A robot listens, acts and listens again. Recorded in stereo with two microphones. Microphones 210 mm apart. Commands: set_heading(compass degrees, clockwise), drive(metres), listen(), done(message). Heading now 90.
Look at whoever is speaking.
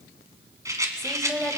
set_heading(60)
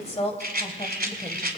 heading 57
set_heading(272)
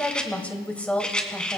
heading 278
done("Facing the woman speaking, 1 to 2 m away.")